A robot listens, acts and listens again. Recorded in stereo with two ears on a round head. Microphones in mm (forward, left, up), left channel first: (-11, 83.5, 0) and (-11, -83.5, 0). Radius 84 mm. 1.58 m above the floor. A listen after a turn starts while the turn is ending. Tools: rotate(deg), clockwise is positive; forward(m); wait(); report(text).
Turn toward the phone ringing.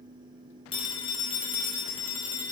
rotate(-25)
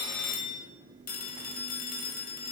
rotate(-125)
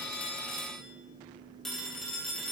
report("Facing the phone ringing.")